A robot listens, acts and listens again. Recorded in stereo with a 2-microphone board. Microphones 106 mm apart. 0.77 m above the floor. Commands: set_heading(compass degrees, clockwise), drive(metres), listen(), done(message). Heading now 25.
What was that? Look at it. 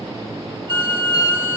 set_heading(75)
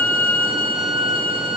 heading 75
set_heading(155)
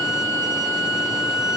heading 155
set_heading(120)
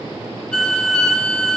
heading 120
set_heading(110)
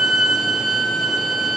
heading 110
done("Found it: a violin, straight ahead, 1 to 2 m away.")